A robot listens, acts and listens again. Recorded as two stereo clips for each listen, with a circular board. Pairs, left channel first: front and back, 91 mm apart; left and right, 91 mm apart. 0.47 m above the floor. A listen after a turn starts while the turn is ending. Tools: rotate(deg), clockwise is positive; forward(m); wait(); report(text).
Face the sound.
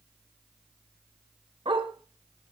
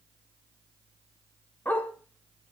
rotate(-160)
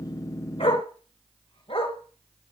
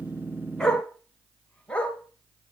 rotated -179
rotate(-10)
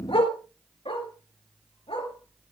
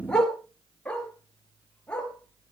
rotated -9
rotate(-10)
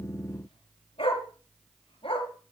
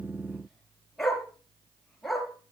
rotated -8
report("Found it: a dog barking, straight ahead.")